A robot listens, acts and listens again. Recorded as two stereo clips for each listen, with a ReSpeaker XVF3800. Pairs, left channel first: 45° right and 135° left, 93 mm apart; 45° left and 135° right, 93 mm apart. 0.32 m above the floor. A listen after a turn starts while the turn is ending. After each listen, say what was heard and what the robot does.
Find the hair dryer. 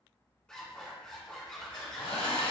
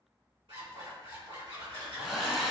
The hair dryer: 50° right. Turn 50° right.
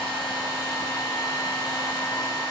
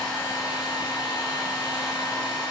Facing the hair dryer, 1 to 2 m away.